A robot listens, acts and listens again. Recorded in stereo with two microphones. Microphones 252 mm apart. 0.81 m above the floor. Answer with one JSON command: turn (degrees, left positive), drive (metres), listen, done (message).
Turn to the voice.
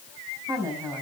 {"turn": -30}
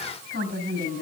{"turn": -135}
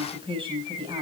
{"turn": -20}
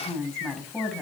{"done": "Found it: a woman speaking, straight ahead."}